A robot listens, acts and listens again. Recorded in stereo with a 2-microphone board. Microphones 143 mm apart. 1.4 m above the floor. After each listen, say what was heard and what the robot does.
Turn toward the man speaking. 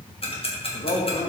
The man speaking: about 65° left or 115° left. Turn 65° left.
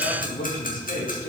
So it is at 75° left. Turn 75° left.
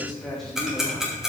Keep listening.
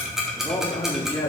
The man speaking is now 15° left. Turn 15° left.
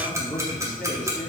Facing the man speaking, 2 to 4 m away.